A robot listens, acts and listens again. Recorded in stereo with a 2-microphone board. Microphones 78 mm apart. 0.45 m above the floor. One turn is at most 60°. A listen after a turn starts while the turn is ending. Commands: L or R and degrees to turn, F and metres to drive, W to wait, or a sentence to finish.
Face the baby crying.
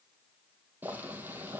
W
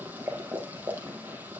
W
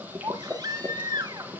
R60
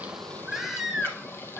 Found it: a baby crying, straight ahead, 1 to 2 m away.